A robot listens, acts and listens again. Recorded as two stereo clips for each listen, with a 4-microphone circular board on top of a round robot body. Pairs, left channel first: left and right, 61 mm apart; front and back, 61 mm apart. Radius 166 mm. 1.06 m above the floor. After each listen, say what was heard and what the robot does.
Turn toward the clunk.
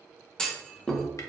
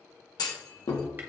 The clunk: 10° left. Turn 10° left.
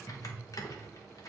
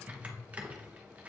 I heard a clunk from this way, but can't make it out now.